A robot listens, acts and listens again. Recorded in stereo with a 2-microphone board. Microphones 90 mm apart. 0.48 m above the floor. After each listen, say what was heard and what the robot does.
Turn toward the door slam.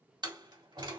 The door slam: about 55° right or 125° right. Turn 55° right.
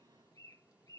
Keep listening.
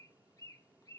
I heard a door slam, but can't make it out now. It was about straight ahead or 70° right.